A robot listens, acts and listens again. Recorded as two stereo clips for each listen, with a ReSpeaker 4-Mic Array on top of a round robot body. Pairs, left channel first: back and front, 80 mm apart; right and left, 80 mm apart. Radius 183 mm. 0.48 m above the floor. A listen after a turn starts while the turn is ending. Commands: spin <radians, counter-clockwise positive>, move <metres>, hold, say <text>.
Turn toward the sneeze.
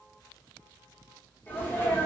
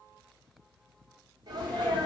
spin 2.01
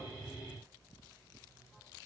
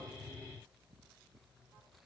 say I heard a sneeze from this way, but can't make it out now.